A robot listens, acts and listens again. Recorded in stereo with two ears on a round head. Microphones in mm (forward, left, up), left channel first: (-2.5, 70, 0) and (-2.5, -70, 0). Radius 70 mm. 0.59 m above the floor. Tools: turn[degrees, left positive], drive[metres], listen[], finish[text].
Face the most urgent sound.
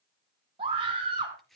Thought: The scream: about 35° right or 145° right.
Action: turn[-35]
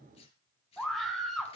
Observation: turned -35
Action: finish[Found it: a scream, straight ahead, over 4 m away.]